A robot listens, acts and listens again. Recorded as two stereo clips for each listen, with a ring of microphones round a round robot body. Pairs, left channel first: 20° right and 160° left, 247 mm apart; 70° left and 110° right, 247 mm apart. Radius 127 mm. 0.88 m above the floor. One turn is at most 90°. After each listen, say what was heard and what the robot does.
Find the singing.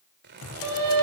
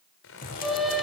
The singing: 160° left. Turn 90° left.
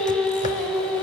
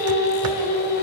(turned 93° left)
The singing is now 65° left. Turn 65° left.
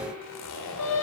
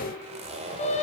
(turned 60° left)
Found it: singing, straight ahead, 2 to 4 m away.